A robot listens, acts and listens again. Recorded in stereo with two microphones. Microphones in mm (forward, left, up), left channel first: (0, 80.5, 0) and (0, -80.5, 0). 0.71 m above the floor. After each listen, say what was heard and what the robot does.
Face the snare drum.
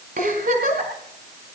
Keep listening.
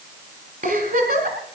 Keep listening.
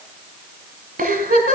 I can't make out a snare drum to turn to.